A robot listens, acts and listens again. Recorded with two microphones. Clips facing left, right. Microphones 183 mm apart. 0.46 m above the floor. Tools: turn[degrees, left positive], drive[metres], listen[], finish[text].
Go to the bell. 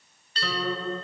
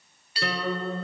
Action: turn[-30]
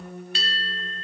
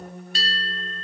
Thought: So it is at 135° right.
Action: turn[-135]
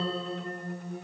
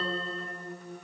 Action: listen[]
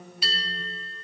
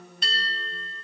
Action: drive[1.0]
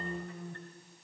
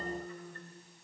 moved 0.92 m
Action: listen[]
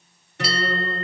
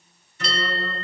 Action: drive[1.0]
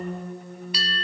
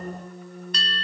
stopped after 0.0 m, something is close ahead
Thought: The bell is now 10° left.
Action: turn[10]
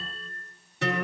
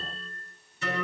Action: finish[I am next to the bell.]